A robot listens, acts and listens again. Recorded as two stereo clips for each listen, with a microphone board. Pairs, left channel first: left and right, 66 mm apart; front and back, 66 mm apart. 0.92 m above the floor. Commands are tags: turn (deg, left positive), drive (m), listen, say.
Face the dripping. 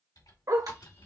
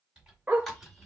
<turn deg="-85"/>
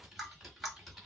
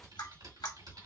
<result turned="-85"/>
<say>Found it: dripping, straight ahead.</say>